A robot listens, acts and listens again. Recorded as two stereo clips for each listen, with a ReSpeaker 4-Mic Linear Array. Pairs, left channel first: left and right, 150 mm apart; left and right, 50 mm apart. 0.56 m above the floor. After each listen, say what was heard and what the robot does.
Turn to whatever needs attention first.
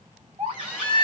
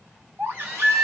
The baby crying: about 45° right or 135° right. Turn 45° right.
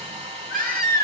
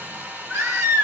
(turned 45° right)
So it is at 95° right. Turn 95° right.
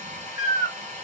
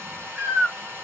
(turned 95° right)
The baby crying is now 25° right. Turn 25° right.
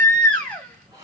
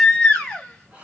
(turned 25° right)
The baby crying is now 10° left. Turn 10° left.
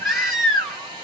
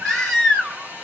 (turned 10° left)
Facing the baby crying, 2 to 4 m away.